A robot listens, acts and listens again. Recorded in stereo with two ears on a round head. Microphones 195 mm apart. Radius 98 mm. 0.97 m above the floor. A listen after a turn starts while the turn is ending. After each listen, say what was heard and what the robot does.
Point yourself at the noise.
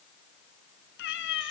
The cat meowing: about 60° left or 120° left. Turn 60° left.
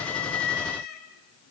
So it is at 50° left. Turn 50° left.
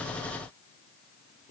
Keep listening.
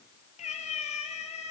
The cat meowing is now 30° left. Turn 30° left.
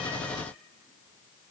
Keep listening.
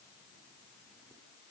Keep listening.
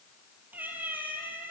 The cat meowing is now 10° right. Turn 10° right.
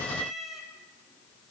Facing the cat meowing, over 4 m away.